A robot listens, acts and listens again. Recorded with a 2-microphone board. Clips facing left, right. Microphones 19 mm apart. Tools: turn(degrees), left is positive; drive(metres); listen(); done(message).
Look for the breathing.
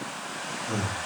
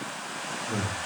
turn(degrees=65)
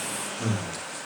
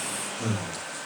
done("Facing the breathing.")